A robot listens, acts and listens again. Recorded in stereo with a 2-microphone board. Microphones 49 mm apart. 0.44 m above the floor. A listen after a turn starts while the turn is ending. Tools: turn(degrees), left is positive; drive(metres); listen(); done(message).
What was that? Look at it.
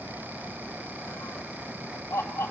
turn(degrees=60)
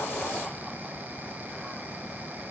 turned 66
listen()
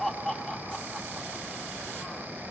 done("Facing the laughter, 2 to 4 m away.")